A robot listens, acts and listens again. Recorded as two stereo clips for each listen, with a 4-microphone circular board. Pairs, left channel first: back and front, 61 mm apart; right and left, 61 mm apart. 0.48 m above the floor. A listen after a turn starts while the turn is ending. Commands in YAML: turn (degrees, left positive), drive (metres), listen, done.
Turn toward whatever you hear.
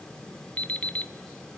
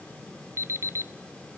turn: 120
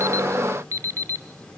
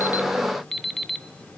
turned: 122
done: "Facing the alarm clock."